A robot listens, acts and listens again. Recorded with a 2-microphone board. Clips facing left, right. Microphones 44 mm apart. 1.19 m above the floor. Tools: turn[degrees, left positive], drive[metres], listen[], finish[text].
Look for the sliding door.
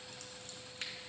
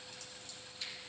Action: listen[]
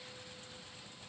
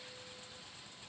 Action: listen[]
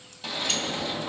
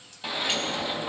Thought: The sliding door: about 15° right or 165° right.
Action: turn[-15]
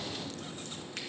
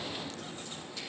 Thought: So it is at 150° right.
Action: turn[-150]
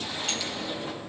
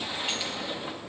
Thought: The sliding door is now 15° right.
Action: turn[-15]
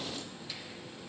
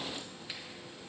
Action: listen[]
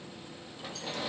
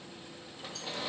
Action: finish[Facing the sliding door.]